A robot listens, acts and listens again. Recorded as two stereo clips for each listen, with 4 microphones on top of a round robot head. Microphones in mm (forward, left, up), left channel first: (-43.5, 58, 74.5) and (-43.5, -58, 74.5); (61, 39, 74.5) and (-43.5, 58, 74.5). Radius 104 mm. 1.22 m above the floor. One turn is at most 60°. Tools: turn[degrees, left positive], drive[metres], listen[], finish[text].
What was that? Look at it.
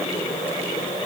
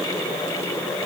Action: listen[]
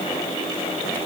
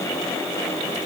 Action: listen[]
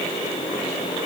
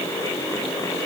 Action: finish[I can't make out anything.]